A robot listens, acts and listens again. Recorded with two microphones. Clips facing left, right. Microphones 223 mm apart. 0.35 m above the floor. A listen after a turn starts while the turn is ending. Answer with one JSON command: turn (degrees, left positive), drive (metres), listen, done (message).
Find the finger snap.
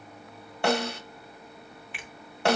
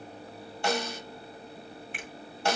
{"turn": -45}
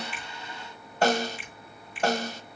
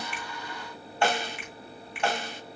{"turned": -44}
{"turn": -85}
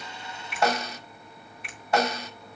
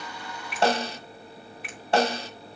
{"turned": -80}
{"done": "Facing the finger snap."}